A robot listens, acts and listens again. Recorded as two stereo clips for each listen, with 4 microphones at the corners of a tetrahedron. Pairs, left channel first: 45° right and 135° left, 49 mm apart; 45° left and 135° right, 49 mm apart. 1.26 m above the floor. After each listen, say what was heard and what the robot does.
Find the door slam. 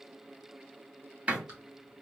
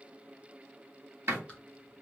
The door slam: 165° right. Turn 165° right.
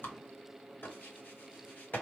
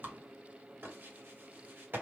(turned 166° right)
Facing where the door slam came from. I can't hear it now.